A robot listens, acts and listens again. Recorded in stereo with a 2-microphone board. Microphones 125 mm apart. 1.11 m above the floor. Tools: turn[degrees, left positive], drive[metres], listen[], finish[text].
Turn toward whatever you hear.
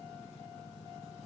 Action: listen[]
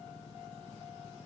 Action: listen[]
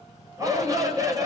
Thought: The shout: about 30° right or 150° right.
Action: turn[-30]
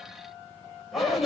Action: finish[Found it: a shout, straight ahead, over 4 m away.]